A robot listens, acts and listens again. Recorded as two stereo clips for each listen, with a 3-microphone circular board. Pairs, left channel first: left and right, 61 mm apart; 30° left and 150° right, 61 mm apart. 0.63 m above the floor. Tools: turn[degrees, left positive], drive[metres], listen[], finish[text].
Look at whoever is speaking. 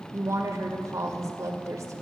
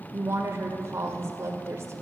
Thought: The woman speaking: 110° right.
Action: turn[-110]
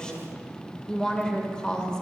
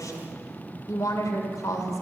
Thought: The woman speaking is now 15° left.
Action: turn[15]
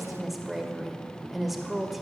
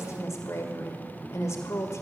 Action: finish[Found it: a woman speaking, straight ahead.]